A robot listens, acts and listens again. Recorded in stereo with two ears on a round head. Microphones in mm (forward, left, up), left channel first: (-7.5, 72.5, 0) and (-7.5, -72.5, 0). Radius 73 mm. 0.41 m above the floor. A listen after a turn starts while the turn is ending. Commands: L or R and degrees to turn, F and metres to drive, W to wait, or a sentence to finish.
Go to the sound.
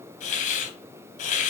L50
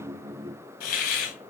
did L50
L70
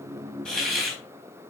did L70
F1.0
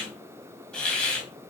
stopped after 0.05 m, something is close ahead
Blocked. The hiss is further on, straight ahead.